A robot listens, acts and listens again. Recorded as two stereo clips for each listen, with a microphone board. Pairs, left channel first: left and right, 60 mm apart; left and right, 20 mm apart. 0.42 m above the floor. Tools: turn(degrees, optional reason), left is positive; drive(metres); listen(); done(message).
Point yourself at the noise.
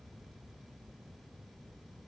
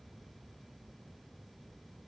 listen()
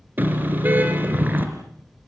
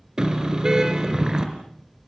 turn(degrees=-35, reason="The car horn: about 35° right or 145° right.")
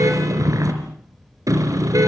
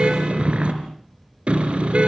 turn(degrees=-110, reason="So it is at 110° right.")
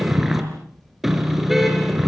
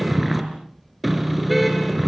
done("Facing the car horn, over 4 m away.")